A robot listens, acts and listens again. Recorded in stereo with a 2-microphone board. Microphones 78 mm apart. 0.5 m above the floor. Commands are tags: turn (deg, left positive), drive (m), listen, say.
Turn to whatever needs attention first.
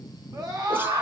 <turn deg="-60"/>
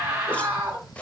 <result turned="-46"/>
<turn deg="-15"/>
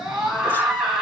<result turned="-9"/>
<turn deg="-10"/>
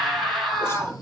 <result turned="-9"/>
<say>Found it: a scream, straight ahead, 2 to 4 m away.</say>